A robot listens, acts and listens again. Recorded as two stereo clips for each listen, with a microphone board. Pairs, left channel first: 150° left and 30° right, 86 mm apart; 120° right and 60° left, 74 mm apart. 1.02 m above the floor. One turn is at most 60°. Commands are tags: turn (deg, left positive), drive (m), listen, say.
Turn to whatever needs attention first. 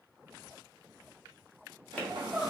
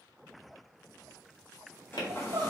<turn deg="60"/>
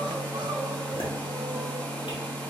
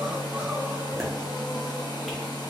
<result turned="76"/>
<turn deg="-20"/>
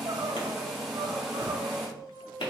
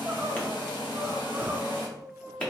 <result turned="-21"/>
<say>Found it: crying, straight ahead, under 1 m away.</say>